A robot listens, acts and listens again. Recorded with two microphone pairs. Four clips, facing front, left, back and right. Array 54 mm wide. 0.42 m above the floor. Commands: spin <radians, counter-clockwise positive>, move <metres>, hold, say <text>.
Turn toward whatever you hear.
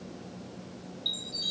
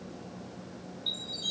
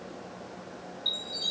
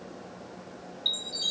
spin -1.75
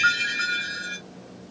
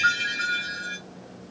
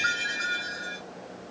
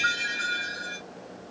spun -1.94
spin 0.26
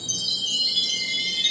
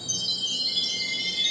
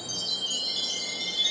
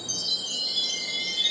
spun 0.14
say Found it: a chime, straight ahead.